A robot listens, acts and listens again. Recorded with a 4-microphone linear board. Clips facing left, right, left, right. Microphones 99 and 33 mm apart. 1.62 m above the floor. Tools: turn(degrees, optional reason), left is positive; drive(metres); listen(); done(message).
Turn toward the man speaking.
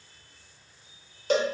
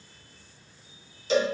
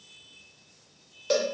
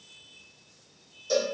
listen()
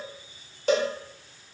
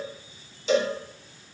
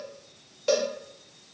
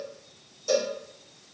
listen()
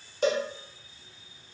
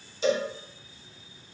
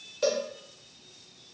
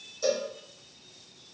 done("I can't make out a man speaking to turn to.")